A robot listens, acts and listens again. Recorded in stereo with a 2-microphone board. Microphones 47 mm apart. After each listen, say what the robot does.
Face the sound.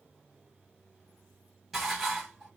Turn 30° right.
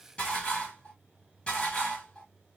Turn 25° left.
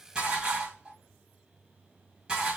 Turn 20° right.
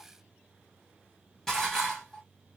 Facing the dishes clattering, 1 to 2 m away.